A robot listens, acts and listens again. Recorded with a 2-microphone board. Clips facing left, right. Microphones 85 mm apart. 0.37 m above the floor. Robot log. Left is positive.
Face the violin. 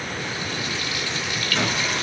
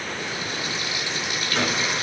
cmd idle
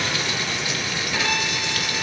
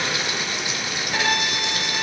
note: The violin: about 40° right or 140° right.
cmd yaw -40
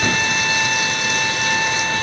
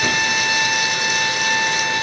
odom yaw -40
end: Facing the violin, 1 to 2 m away.